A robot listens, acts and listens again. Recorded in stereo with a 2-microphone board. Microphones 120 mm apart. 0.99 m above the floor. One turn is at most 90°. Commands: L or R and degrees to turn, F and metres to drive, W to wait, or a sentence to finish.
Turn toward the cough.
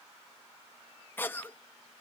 L15
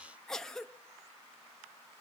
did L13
Facing the cough, under 1 m away.